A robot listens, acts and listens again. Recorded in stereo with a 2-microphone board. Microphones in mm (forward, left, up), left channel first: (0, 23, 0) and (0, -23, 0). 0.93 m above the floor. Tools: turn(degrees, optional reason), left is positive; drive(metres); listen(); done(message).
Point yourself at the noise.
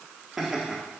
turn(degrees=-30)
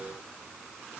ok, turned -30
listen()
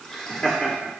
turn(degrees=15, reason="So it is at 15° left.")
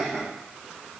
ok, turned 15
done("Found it: laughter, straight ahead, 2 to 4 m away.")